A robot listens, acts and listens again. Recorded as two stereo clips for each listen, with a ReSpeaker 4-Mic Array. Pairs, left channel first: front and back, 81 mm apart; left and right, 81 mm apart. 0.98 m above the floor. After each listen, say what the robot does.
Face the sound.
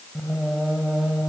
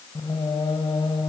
Turn 100° left.
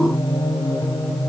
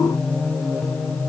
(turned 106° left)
Turn 20° left.
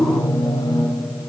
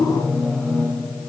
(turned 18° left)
Turn 10° left.
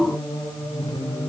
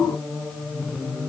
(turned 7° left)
Found it: singing, straight ahead, over 4 m away.